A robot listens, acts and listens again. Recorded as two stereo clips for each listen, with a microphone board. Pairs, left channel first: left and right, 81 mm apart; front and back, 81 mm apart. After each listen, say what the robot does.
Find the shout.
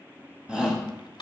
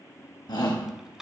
Turn 15° right.
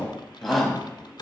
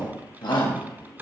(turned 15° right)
Facing the shout, 1 to 2 m away.